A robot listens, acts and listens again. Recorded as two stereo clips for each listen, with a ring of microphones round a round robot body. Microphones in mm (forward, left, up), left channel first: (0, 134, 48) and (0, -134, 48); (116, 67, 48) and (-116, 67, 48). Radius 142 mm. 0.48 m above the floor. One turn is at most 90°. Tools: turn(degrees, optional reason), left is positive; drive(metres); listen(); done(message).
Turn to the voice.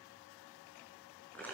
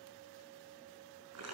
listen()
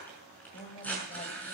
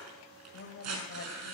turn(degrees=25, reason="The woman speaking: 25° left.")
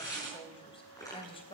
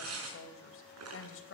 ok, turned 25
turn(degrees=20, reason="The woman speaking is now 20° left.")
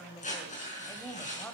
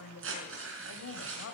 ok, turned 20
done("Found it: a woman speaking, straight ahead, 2 to 4 m away.")